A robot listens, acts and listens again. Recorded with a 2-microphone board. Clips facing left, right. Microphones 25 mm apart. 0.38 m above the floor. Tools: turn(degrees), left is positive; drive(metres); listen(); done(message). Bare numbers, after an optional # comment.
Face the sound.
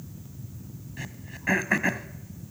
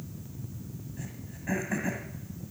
# The throat clearing: about 65° left or 115° left.
turn(65)
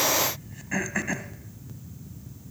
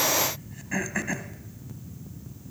# So it is at 10° left.
turn(10)
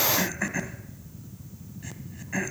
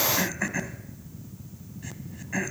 done("Facing the throat clearing.")